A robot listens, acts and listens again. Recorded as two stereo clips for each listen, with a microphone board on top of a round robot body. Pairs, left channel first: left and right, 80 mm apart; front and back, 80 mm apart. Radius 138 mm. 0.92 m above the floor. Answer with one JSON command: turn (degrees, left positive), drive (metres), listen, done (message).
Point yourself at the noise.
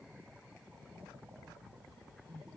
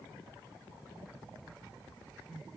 {"listen": true}
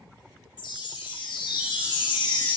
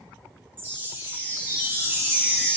{"turn": 115}
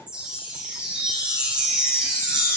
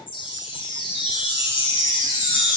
{"turn": -10}
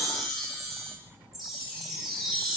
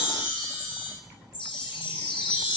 {"done": "Found it: a chime, straight ahead, 2 to 4 m away."}